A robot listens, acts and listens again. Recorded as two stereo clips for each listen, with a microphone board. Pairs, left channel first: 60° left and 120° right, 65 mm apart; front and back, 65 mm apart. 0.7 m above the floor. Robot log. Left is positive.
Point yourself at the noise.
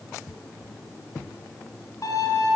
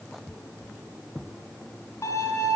note: The violin: 25° left.
cmd yaw +25
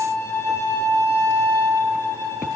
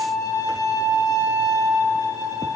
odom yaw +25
end: Found it: a violin, straight ahead, 2 to 4 m away.